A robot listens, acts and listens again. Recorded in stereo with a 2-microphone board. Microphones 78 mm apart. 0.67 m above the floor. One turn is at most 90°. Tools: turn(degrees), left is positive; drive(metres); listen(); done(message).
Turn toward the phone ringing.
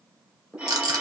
turn(degrees=-15)
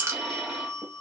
done("Facing the phone ringing.")